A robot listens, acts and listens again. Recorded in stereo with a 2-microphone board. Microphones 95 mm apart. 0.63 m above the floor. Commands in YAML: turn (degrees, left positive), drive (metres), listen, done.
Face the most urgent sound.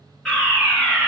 turn: 30
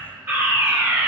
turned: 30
turn: -25
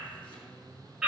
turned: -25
done: "Facing the fire alarm, over 4 m away."